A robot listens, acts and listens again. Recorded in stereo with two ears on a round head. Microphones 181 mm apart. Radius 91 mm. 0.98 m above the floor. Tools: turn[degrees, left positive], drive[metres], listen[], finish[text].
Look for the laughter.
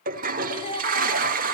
Thought: The laughter: about 30° left or 150° left.
Action: turn[30]
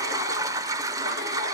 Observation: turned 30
Action: listen[]
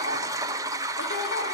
Action: listen[]
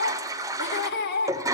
Thought: So it is at 120° left.
Action: turn[120]
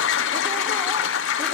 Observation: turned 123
Action: listen[]
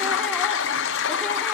Action: listen[]
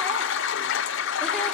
Action: finish[Facing where the laughter came from. I can't hear it now.]